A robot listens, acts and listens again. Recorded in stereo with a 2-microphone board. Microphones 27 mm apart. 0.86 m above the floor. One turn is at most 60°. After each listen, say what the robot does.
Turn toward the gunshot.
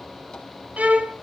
Keep listening.
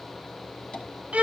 Keep listening.
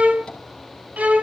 I can't make out a gunshot, only a violin.